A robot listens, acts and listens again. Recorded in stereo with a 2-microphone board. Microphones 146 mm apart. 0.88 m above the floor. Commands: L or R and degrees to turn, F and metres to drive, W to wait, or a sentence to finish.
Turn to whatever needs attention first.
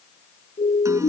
L50
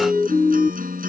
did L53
Facing the siren.